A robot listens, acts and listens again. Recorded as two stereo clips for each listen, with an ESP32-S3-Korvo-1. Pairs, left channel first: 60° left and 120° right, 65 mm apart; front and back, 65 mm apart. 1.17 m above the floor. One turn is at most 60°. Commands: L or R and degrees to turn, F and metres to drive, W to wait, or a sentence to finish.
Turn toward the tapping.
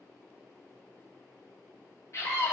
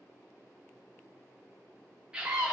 W
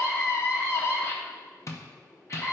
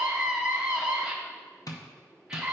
L20
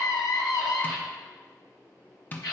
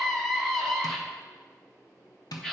Found it: tapping, straight ahead.